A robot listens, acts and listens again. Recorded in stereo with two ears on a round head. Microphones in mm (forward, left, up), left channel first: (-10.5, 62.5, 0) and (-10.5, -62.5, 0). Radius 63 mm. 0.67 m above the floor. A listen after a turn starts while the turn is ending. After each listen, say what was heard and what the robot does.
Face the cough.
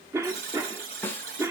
The cough: about 20° right or 160° right. Turn 20° right.
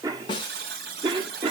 So it is at 135° right. Turn 135° right.
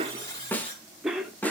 Facing the cough, 1 to 2 m away.